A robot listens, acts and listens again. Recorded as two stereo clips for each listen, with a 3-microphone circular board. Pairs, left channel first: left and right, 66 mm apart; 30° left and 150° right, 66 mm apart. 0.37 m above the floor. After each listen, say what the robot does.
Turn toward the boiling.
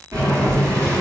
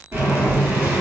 Turn 105° right.
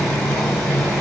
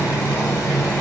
Turn 10° left.
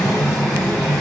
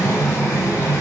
Facing the boiling.